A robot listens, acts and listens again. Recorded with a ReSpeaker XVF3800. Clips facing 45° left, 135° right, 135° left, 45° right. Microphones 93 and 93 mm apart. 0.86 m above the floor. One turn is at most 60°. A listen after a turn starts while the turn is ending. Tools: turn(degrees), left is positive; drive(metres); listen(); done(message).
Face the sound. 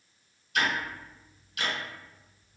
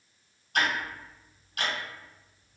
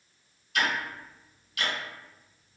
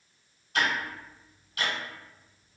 turn(degrees=-60)
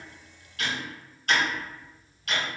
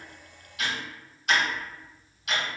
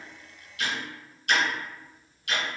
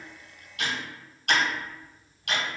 turn(degrees=-55)
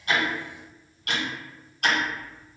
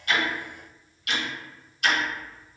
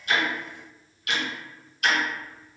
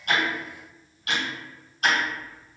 turn(degrees=10)
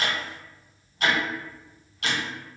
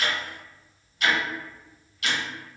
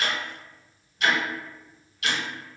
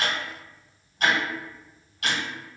done("Found it: ticking, straight ahead.")